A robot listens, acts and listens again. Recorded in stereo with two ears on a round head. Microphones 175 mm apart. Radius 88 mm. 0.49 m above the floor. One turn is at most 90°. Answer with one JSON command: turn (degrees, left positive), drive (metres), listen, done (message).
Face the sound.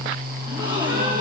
{"turn": -25}
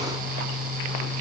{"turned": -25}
{"listen": true}
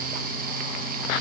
{"done": "I heard a gasp, but can't make it out now. It was about straight ahead or 130° right."}